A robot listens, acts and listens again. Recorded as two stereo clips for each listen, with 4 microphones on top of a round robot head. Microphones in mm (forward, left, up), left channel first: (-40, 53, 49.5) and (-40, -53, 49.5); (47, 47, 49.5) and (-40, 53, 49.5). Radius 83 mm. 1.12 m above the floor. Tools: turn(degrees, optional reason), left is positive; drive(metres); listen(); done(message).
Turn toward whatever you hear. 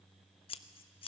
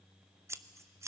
turn(degrees=120, reason="The scissors: 120° left.")
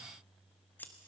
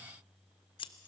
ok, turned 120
turn(degrees=15, reason="The scissors is now 15° left.")
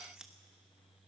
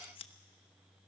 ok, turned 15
done("Found it: scissors, straight ahead, 1 to 2 m away.")